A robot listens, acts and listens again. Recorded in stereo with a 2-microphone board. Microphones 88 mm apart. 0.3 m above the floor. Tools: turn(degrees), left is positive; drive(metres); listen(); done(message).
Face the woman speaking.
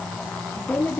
turn(degrees=20)
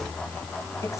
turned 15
listen()
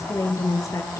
turn(degrees=40)
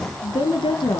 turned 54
turn(degrees=75)
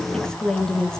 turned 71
done("Facing the woman speaking, 2 to 4 m away.")